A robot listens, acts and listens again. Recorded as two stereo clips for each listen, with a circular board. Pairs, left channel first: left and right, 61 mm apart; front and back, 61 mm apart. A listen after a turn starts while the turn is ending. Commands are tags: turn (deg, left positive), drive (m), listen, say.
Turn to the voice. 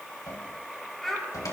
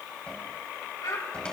<say>Found it: a child speaking, straight ahead.</say>